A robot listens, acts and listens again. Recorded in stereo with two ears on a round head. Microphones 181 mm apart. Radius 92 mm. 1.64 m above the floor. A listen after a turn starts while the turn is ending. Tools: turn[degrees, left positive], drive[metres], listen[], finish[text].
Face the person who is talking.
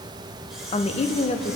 Thought: The woman speaking: about 35° left or 145° left.
Action: turn[35]
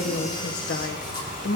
Thought: So it is at 115° left.
Action: turn[115]
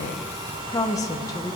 Thought: The woman speaking is now 20° left.
Action: turn[20]
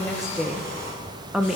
Action: finish[Found it: a woman speaking, straight ahead, 1 to 2 m away.]